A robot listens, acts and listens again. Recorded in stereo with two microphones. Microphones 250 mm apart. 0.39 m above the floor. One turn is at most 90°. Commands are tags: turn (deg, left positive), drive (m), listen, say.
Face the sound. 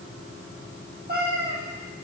<turn deg="-35"/>
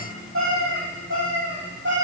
<turn deg="-90"/>
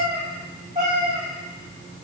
<turn deg="-30"/>
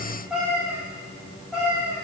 <say>Found it: a cat meowing, straight ahead, 2 to 4 m away.</say>